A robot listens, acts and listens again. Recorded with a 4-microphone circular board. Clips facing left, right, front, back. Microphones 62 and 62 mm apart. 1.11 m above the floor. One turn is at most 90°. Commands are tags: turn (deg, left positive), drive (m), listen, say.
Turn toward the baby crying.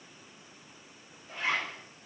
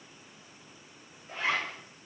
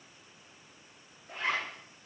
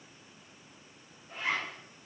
<listen/>
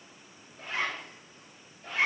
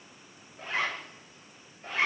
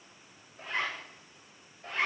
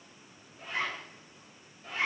<listen/>
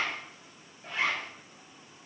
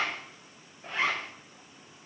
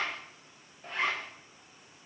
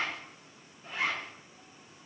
<say>I can't make out a baby crying, only a zipper.</say>